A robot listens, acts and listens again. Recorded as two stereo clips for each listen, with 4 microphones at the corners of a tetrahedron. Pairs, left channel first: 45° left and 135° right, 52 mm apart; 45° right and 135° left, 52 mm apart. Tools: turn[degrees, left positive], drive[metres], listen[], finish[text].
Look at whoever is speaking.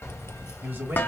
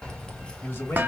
Thought: The man speaking: 95° right.
Action: turn[-95]
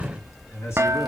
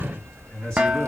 Thought: The man speaking is now 25° left.
Action: turn[25]
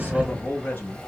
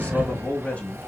Action: finish[Facing the man speaking, 1 to 2 m away.]